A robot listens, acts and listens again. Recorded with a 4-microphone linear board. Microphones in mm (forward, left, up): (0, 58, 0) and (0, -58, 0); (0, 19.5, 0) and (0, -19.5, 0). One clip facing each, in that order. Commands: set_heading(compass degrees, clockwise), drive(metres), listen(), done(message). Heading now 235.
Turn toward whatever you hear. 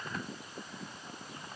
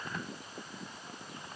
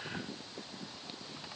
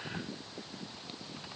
listen()
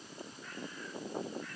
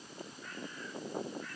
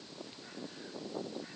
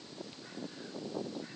listen()
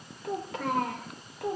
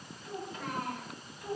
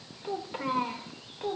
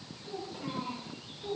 set_heading(145)
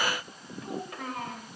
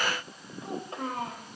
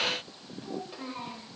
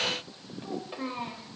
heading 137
set_heading(167)
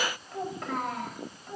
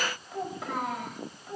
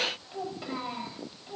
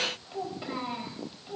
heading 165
done("Facing the child speaking, over 4 m away.")